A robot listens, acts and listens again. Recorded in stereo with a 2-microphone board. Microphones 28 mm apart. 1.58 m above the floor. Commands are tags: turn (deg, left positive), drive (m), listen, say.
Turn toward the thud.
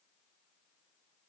<listen/>
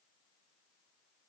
<listen/>
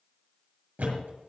<turn deg="-90"/>
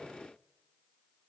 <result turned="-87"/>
<say>I heard a thud from this way, but can't make it out now.</say>